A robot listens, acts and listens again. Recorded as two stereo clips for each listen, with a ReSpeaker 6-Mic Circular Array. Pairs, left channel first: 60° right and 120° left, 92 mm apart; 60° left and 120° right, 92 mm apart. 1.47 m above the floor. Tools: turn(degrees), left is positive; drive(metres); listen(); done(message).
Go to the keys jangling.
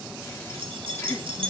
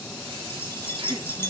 turn(degrees=120)
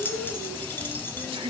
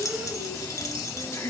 drive(metres=1.0)
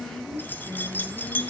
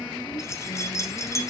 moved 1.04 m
drive(metres=1.0)
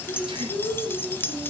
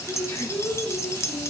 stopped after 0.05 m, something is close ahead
done("I am next to the keys jangling.")